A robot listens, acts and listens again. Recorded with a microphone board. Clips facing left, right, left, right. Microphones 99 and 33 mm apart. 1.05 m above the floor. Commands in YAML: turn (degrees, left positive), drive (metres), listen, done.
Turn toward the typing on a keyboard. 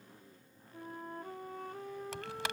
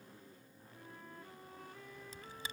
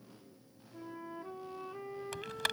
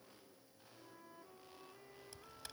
turn: 90
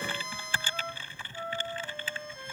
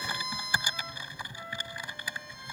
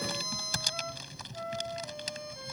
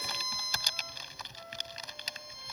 turn: -15
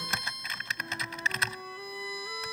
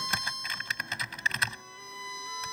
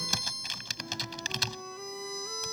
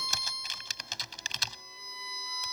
done: "Facing the typing on a keyboard."